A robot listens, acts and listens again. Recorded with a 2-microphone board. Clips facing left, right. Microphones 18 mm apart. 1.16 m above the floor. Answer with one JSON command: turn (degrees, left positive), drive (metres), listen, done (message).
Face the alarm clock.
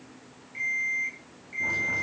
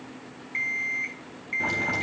{"turn": -55}
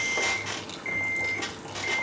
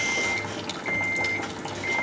{"done": "Found it: an alarm clock, straight ahead."}